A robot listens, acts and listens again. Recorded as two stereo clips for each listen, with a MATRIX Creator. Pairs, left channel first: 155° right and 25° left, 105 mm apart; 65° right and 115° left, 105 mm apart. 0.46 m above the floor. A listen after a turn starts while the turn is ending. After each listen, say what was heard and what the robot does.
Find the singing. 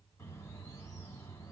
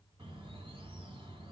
Keep listening.
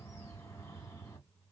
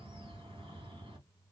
Keep listening.
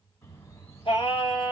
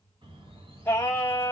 The singing: 130° right. Turn 130° right.
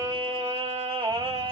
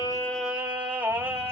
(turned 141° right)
The singing is now 50° left. Turn 50° left.
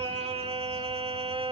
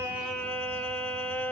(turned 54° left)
Found it: singing, straight ahead, 1 to 2 m away.